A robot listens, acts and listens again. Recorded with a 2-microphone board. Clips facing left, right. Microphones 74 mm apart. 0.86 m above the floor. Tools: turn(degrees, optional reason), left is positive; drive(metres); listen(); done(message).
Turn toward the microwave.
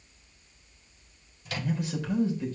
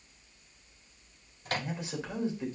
turn(degrees=-45, reason="The microwave: about 45° right or 135° right.")
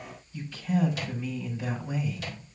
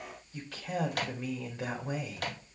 turn(degrees=-75, reason="So it is at 75° right.")
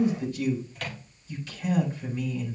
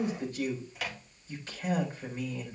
done("Found it: a microwave, straight ahead, 1 to 2 m away.")